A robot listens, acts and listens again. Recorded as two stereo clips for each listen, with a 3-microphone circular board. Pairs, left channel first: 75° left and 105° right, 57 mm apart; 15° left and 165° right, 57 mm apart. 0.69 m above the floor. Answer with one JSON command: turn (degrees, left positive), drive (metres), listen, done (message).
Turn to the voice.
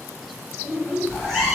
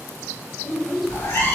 {"turn": -50}
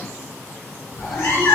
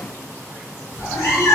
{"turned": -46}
{"listen": true}
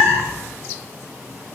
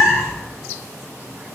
{"listen": true}
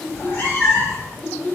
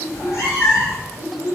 {"done": "Facing the child speaking, 1 to 2 m away."}